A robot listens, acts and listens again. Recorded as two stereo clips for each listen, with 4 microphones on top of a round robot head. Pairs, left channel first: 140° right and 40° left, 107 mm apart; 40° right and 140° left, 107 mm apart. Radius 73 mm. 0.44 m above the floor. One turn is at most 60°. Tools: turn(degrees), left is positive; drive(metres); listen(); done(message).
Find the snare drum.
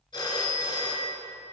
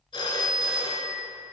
listen()
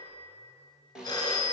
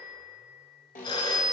turn(degrees=-40)
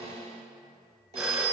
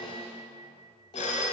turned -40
done("Facing the snare drum, 1 to 2 m away.")